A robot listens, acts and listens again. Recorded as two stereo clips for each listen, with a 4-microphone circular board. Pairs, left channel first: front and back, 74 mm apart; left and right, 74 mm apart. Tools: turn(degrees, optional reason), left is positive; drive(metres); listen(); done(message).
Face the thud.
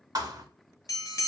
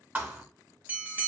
turn(degrees=-155, reason="The thud: 155° right.")
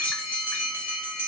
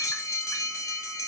done("Facing where the thud came from. I can't hear it now.")